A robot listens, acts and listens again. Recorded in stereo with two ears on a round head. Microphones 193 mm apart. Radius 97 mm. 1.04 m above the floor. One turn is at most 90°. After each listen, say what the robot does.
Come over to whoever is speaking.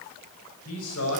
Turn 75° left.
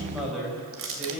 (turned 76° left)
Drive 1.0 m forward.
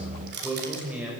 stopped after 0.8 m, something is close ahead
Blocked. The man speaking is further on, straight ahead.